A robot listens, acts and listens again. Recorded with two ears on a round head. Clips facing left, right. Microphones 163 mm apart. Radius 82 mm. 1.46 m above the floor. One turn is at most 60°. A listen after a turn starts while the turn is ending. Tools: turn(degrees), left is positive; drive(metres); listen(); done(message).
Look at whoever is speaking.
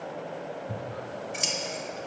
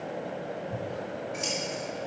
listen()
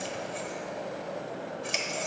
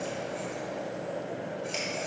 listen()
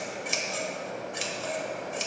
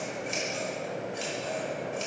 done("I can't make out anyone speaking, only scissors.")